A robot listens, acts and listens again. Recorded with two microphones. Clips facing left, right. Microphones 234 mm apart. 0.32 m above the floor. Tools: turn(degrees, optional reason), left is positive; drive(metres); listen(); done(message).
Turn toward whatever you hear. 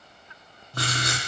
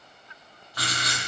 turn(degrees=55, reason="The writing: about 55° left or 125° left.")
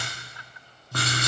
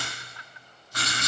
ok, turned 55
turn(degrees=70, reason="So it is at 70° left.")
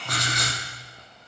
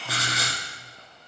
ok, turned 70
done("Facing the writing, 2 to 4 m away.")